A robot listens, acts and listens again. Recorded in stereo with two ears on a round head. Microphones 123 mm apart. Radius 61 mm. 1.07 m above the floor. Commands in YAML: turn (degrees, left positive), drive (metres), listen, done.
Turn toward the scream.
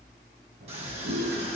turn: -45
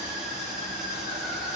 done: "Found it: a scream, straight ahead."